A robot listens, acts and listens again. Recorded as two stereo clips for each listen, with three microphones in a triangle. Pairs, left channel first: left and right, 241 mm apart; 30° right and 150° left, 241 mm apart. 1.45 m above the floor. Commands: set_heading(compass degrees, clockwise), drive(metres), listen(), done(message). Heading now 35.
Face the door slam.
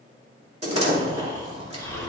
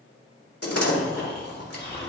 set_heading(60)
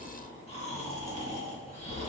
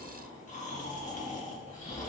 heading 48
set_heading(63)
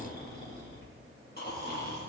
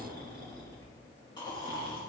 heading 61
done("Facing where the door slam came from. I can't hear it now.")